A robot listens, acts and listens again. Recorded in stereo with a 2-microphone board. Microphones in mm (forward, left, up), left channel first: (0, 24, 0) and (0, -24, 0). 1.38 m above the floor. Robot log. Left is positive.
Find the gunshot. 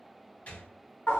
note: The gunshot: about 35° left or 145° left.
cmd yaw +35
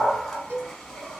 cmd idle
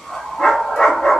end: I heard a gunshot, but can't make it out now. It was about straight ahead or 110° left.